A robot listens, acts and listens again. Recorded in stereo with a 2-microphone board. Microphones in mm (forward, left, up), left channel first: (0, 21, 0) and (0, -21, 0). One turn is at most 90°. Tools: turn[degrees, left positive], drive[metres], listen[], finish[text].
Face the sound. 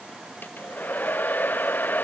Thought: The hair dryer: about 50° left or 130° left.
Action: turn[50]
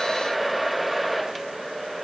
Action: finish[Facing the hair dryer.]